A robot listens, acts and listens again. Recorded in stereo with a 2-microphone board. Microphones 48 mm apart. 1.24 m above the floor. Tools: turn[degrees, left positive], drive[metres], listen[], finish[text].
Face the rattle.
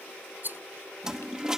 Thought: The rattle: about 40° right or 140° right.
Action: turn[-40]
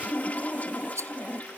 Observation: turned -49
Thought: So it is at 90° right.
Action: turn[-90]
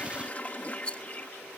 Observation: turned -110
Thought: The rattle is now 20° left.
Action: turn[20]
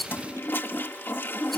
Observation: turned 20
Action: finish[Found it: a rattle, straight ahead.]